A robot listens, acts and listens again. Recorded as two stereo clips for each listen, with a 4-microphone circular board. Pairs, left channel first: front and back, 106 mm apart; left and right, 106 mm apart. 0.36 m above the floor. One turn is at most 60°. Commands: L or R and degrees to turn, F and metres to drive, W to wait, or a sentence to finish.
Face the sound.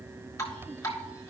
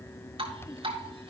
R60
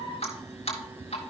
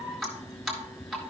Found it: dripping, straight ahead.